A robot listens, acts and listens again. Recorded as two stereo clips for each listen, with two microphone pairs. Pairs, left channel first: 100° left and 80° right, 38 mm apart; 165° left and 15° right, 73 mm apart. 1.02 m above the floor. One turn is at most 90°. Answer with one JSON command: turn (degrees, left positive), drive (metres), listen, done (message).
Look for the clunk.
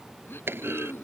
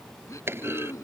{"turn": -70}
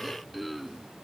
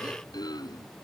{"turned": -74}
{"done": "Facing where the clunk came from. I can't hear it now."}